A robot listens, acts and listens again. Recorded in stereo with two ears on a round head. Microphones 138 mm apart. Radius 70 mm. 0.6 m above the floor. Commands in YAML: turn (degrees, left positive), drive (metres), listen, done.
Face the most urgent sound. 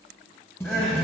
turn: 30
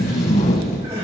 turn: -25
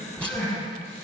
turn: 15
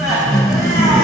done: "Found it: crying, straight ahead, over 4 m away."